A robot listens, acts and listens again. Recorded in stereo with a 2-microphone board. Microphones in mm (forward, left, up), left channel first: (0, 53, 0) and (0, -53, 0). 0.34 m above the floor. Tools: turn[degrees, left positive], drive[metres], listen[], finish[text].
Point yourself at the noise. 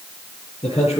Thought: The man speaking: about 70° left or 110° left.
Action: turn[70]
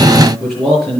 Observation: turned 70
Action: finish[Facing the man speaking, over 4 m away.]